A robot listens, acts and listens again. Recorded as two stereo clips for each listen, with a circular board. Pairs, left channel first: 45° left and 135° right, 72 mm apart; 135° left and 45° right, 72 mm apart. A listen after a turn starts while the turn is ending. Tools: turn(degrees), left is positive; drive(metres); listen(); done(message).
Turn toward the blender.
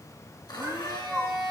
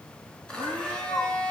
turn(degrees=60)
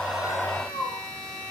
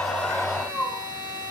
turn(degrees=-30)
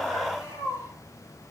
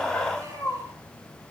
listen()
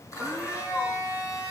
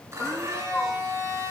done("Found it: a blender, straight ahead, over 4 m away.")